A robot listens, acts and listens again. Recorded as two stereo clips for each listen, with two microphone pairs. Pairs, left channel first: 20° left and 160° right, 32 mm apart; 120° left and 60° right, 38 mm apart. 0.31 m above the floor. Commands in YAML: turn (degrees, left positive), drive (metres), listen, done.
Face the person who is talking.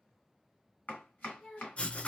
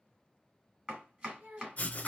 turn: -35
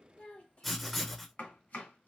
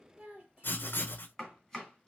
done: "Facing the child speaking, 1 to 2 m away."